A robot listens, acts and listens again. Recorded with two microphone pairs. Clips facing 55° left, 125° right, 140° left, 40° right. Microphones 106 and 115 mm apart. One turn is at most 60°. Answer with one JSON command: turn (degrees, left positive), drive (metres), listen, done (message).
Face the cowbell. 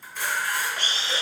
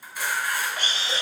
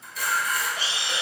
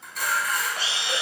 {"listen": true}
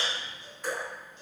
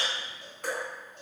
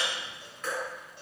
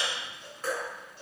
{"listen": true}
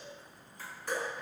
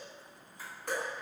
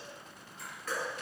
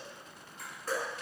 {"done": "I can't make out a cowbell, only a camera shutter and dripping."}